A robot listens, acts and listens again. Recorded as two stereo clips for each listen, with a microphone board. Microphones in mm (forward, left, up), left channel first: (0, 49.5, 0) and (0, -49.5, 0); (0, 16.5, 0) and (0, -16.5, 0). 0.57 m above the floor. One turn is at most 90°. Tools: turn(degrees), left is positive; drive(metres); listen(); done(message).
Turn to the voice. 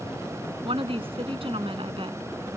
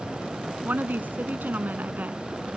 turn(degrees=-70)
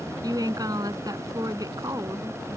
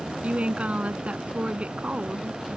turn(degrees=-40)
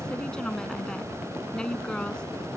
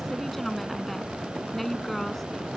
turn(degrees=10)
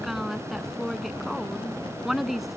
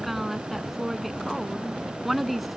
done("Found it: a woman speaking, straight ahead.")